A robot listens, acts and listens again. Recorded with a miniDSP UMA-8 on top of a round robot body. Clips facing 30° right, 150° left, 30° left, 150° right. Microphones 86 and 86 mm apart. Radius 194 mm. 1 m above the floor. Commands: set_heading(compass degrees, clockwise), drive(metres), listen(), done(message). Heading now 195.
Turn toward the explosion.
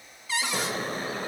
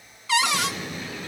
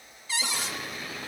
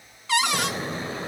set_heading(280)
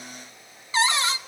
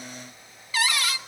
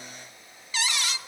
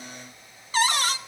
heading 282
done("Facing where the explosion came from. I can't hear it now.")